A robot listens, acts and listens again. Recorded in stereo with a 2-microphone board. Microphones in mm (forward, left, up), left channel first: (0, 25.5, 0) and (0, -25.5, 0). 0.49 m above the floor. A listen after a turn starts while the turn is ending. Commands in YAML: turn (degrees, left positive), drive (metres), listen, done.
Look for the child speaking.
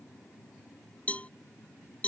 listen: true
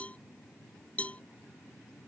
listen: true
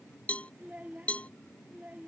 turn: -30
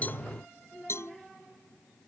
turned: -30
done: "Found it: a child speaking, straight ahead."